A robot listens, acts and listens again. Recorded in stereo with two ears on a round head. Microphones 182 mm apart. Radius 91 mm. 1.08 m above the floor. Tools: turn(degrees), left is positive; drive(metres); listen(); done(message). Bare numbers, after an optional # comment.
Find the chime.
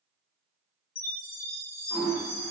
# The chime: about 45° left or 135° left.
turn(45)
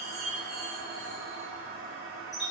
done("Facing the chime.")